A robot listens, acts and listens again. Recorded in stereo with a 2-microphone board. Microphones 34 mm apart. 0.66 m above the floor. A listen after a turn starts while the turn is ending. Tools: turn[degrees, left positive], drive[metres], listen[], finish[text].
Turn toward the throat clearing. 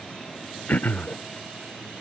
Thought: The throat clearing: about 65° left or 115° left.
Action: turn[65]
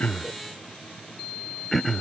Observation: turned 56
Action: finish[Found it: throat clearing, straight ahead.]